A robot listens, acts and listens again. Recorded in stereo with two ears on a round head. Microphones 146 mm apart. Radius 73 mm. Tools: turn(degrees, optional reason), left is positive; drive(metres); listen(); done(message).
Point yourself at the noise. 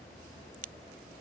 turn(degrees=-55, reason="The crack: about 55° right or 125° right.")
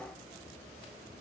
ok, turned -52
listen()
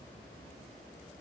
done("I heard a crack, but can't make it out now. It was about 5° right or 70° right.")